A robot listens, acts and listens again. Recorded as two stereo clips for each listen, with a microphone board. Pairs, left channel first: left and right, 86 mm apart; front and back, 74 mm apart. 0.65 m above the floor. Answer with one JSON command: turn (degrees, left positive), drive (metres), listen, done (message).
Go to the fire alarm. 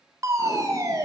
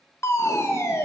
{"turn": -45}
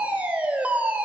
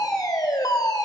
{"turn": -20}
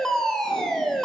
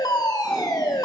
{"drive": 1.0}
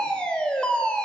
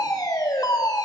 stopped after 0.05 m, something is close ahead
{"turn": 10}
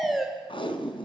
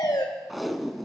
{"done": "Something is in my way. I am facing the fire alarm but have not reached it."}